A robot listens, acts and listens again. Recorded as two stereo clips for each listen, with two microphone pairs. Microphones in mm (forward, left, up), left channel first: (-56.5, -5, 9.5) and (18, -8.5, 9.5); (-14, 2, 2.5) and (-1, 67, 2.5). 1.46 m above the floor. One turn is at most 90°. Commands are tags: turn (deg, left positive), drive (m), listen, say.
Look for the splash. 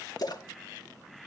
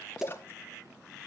<turn deg="-90"/>
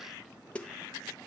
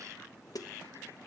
<turn deg="-70"/>
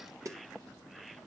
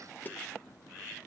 <say>Facing where the splash came from. I can't hear it now.</say>